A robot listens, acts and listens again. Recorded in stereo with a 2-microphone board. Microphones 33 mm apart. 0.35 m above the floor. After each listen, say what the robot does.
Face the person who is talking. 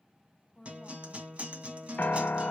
Turn 50° left.
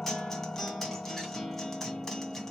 Keep listening.
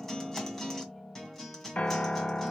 Keep listening.
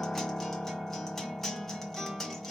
I heard a woman speaking, but can't make it out now. It was about straight ahead or 80° left.